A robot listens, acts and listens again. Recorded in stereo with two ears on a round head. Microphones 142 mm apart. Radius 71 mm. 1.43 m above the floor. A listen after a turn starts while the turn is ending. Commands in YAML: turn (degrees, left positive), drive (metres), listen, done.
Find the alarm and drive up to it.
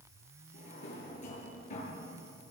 listen: true
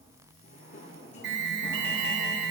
turn: -90
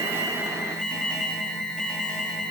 drive: 1.0
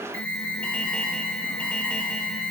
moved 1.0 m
turn: 10
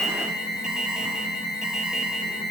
drive: 1.0
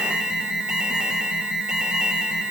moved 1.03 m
drive: 1.0
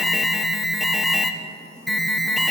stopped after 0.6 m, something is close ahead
done: "I am next to the alarm."